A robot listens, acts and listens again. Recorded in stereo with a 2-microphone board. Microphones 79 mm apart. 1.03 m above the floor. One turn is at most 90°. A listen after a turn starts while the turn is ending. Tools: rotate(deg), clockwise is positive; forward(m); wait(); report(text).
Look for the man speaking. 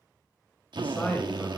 rotate(-20)
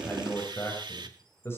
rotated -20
rotate(-30)
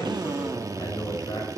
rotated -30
rotate(-90)
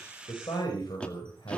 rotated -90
rotate(-75)
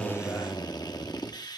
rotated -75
wait()
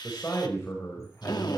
rotate(-30)
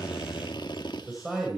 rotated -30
report("Found it: a man speaking, straight ahead.")